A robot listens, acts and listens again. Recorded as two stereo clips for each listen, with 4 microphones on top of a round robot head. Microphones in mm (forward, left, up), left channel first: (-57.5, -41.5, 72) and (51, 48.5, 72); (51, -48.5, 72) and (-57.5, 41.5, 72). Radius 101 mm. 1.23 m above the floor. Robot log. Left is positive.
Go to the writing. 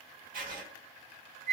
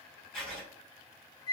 note: The writing: 45° left.
cmd yaw +45
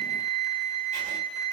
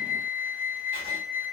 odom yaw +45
cmd idle
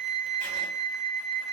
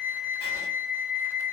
cmd idle
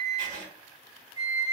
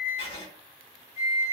note: The writing is now 10° left.
cmd yaw +10
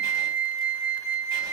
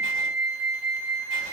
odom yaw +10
cmd idle
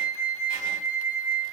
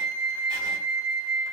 cmd idle
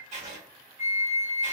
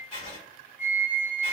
cmd fwd 1.0
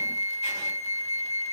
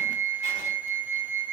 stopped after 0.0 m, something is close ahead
cmd idle
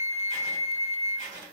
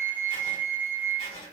end: Something is in my way. I am facing the writing but have not reached it.